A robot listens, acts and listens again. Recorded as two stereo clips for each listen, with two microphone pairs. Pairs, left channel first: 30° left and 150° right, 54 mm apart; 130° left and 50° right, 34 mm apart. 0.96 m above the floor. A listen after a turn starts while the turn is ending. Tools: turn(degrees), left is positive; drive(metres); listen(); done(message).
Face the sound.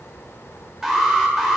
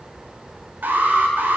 turn(degrees=-70)
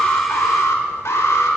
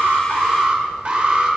done("Facing the alarm.")